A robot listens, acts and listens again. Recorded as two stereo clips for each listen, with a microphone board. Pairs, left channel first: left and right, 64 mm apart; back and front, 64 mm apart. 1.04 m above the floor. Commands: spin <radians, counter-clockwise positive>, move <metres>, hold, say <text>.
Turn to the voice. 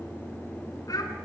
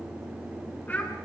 spin 2.09
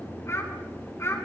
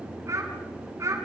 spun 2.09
spin 0.79
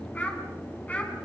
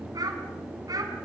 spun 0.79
spin 0.44
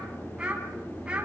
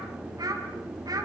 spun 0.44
spin -0.26
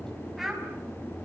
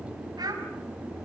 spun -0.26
say Facing the child speaking.